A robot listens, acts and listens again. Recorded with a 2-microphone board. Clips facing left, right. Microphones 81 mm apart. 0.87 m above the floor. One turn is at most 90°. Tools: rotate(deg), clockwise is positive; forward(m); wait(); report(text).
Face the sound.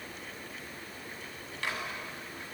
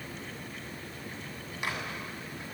rotate(30)
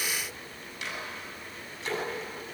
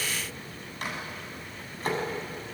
rotate(90)
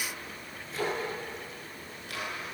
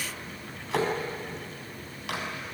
rotate(90)
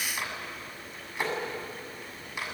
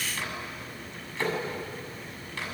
rotate(-15)
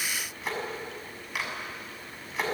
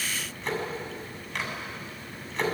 report("Facing the microwave, over 4 m away.")